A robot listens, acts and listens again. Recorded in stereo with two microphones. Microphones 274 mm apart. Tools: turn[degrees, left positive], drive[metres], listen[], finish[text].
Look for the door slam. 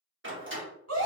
Thought: The door slam: about 45° right or 135° right.
Action: turn[-45]
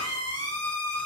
Action: listen[]
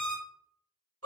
Action: finish[I heard a door slam, but can't make it out now. It was about straight ahead or 90° right.]